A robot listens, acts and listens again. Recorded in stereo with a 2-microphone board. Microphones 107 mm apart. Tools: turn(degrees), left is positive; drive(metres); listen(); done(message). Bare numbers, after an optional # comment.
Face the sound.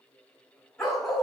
turn(30)
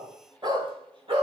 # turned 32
# So it is at 55° right.
turn(-55)
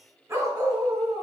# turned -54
# The dog barking is now 40° right.
turn(-40)
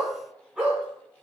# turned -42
# The dog barking is now 15° right.
turn(-15)
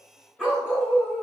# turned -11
done("Found it: a dog barking, straight ahead, 2 to 4 m away.")